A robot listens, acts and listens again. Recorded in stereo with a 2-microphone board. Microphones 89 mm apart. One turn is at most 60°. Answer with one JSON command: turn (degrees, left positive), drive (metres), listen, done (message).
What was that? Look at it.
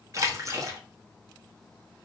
{"turn": -40}
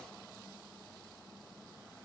{"listen": true}
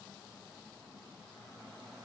{"done": "I heard a splash, but can't make it out now. It was about straight ahead or 100° right."}